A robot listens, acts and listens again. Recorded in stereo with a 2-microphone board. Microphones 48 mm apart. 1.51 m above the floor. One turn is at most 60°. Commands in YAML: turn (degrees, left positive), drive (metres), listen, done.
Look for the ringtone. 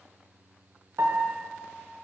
listen: true
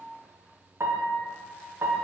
listen: true
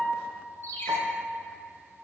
turn: 60
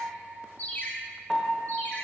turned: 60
turn: 45
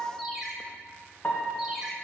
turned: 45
done: "Found it: a ringtone, straight ahead, 1 to 2 m away."